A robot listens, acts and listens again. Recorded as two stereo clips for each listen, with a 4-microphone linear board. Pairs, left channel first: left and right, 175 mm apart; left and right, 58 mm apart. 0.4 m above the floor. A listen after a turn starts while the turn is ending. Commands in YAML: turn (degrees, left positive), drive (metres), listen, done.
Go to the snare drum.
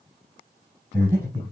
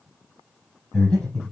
listen: true
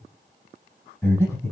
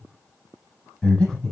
listen: true
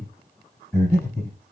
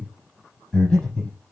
done: "I can't make out a snare drum, only breathing."